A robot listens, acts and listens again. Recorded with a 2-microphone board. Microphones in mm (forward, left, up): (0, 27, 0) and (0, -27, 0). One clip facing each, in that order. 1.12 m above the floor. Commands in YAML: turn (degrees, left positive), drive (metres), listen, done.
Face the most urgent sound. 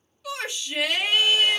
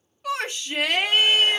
turn: -45
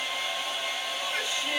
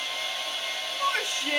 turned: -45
turn: -80
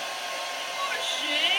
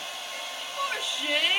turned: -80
done: "Facing the shout, 1 to 2 m away."